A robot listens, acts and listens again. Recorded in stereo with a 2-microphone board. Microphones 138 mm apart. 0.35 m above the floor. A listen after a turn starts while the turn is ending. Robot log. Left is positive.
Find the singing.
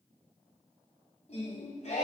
note: The singing: about 55° left or 125° left.
cmd yaw +55
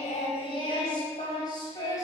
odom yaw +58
note: So it is at 30° left.
cmd yaw +30
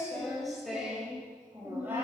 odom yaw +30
note: The singing is now 15° right.
cmd yaw -15
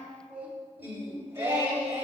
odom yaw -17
note: The singing is now 15° right.
cmd yaw -15
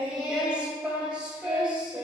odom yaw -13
end: Found it: singing, straight ahead, 1 to 2 m away.